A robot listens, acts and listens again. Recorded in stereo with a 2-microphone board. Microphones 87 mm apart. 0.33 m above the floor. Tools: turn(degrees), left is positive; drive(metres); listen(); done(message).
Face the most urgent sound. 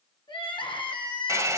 turn(degrees=70)
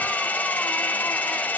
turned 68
listen()
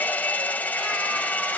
listen()
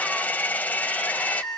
done("Found it: crying, straight ahead.")